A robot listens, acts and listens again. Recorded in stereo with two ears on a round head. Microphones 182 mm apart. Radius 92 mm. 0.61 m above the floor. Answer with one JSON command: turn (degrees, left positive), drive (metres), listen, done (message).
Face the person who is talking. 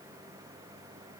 {"listen": true}
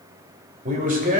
{"turn": -45}
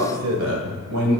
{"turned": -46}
{"turn": -75}
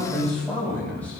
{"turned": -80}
{"turn": 10}
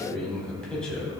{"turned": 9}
{"done": "Found it: a man speaking, straight ahead."}